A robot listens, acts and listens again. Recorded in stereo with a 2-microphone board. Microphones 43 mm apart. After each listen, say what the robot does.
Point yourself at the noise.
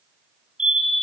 Turn 20° right.
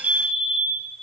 Turn 140° right.
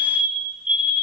Turn 30° right.
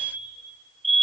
Facing the fire alarm, over 4 m away.